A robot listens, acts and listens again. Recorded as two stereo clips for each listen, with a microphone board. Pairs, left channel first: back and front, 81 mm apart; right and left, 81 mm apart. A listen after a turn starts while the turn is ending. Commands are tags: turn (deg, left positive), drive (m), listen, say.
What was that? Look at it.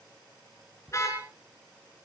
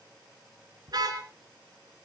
<turn deg="125"/>
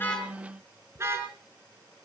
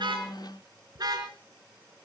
<turn deg="55"/>
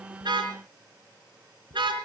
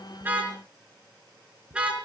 <turn deg="15"/>
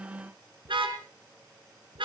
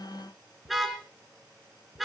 <say>Found it: a car horn, straight ahead.</say>